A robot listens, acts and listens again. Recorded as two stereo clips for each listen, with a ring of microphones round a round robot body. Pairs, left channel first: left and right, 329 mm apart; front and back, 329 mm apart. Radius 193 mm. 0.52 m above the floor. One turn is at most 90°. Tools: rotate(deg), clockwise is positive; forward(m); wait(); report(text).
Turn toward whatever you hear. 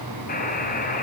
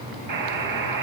rotate(-90)
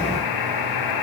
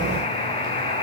rotate(-75)
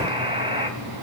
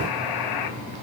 rotate(15)
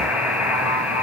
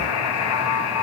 report("Facing the buzzer.")